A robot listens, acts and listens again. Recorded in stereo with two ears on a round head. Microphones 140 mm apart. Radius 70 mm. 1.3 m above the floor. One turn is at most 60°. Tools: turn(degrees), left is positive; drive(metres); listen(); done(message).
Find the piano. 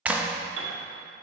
turn(degrees=-60)
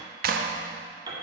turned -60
turn(degrees=-25)
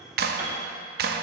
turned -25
listen()
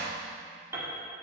turn(degrees=-15)
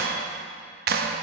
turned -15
listen()
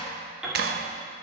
done("Found it: a piano, straight ahead, 2 to 4 m away.")